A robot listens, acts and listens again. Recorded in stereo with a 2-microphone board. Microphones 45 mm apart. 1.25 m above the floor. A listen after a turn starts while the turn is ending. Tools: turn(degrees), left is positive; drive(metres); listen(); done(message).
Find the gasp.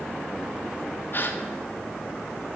turn(degrees=45)
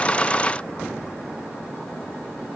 listen()
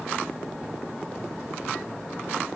done("I heard a gasp, but can't make it out now. It was about straight ahead or 90° left.")